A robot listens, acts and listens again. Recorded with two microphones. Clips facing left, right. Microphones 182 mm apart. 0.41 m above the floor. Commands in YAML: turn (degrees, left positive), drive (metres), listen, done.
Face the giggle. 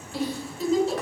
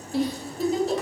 turn: -45
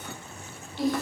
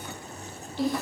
done: "Facing the giggle, 1 to 2 m away."